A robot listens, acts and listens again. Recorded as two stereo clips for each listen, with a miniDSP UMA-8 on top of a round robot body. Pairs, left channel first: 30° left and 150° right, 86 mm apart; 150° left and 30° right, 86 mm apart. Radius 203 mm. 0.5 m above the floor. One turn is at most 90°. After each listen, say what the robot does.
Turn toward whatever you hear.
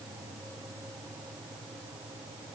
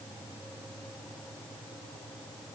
Keep listening.
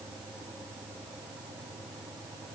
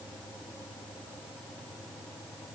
Keep listening.
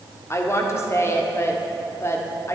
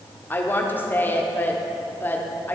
Turn 85° left.
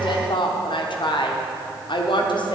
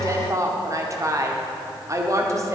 Turn 20° left.
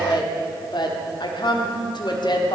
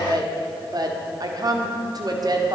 Turn 10° left.
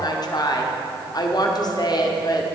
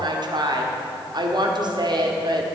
Facing the woman speaking, 1 to 2 m away.